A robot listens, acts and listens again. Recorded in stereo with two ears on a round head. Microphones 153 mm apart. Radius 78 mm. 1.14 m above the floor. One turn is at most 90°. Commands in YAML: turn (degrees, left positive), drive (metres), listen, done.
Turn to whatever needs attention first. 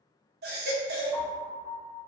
turn: -65
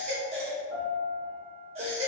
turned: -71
turn: -40
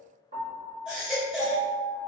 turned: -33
done: "Facing the baby crying, under 1 m away."